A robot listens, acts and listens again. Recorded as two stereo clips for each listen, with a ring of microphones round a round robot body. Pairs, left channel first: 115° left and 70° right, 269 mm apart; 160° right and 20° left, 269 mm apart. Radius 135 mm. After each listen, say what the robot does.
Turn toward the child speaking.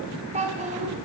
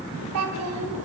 Facing the child speaking, 2 to 4 m away.